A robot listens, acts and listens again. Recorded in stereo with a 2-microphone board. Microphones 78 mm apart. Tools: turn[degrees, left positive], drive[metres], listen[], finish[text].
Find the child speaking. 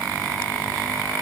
Action: listen[]
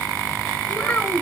Thought: The child speaking: about 20° left or 160° left.
Action: turn[20]
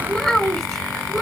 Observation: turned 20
Action: finish[Facing the child speaking, over 4 m away.]